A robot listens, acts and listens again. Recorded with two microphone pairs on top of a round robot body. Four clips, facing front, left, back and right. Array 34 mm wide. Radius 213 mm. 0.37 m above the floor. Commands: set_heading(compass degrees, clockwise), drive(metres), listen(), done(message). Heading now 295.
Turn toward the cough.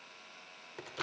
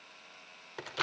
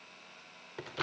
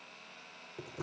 listen()
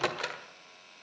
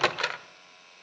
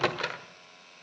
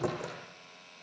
listen()
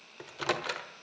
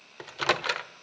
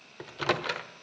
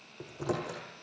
done("I can't make out a cough, only a microwave.")